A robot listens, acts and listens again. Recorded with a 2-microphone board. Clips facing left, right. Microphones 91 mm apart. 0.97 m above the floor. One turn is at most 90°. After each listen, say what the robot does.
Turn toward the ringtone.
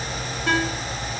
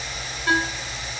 Turn 70° left.
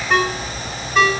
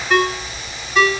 Found it: a ringtone, straight ahead.